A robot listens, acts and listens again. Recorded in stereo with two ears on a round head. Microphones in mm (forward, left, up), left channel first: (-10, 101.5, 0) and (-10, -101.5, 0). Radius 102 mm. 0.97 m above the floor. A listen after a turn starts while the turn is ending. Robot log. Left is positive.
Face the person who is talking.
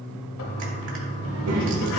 note: The child speaking: about 70° right or 110° right.
cmd yaw -70
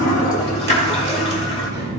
note: So it is at 20° right.
cmd yaw -20
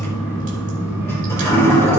cmd idle
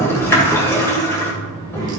note: The child speaking is now 20° right.
cmd yaw -20
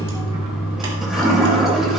cmd idle
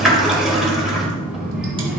end: Facing the child speaking, over 4 m away.